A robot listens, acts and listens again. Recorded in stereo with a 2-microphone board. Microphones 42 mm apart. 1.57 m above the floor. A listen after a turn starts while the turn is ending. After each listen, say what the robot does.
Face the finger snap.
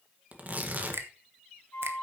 Turn 75° right.
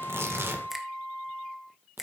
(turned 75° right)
Facing the finger snap.